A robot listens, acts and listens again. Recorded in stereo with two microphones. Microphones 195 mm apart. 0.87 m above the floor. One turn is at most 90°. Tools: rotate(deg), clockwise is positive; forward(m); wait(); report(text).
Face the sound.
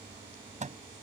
rotate(40)
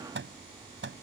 rotate(90)
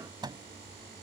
rotate(20)
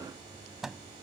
report("Facing the microwave.")